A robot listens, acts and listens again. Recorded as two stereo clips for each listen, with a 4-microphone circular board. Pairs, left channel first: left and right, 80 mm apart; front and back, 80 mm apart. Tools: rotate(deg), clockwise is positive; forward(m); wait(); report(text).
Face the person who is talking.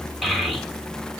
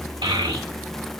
rotate(-180)
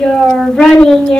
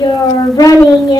rotate(-10)
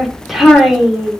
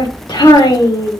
report("Found it: a child speaking, straight ahead.")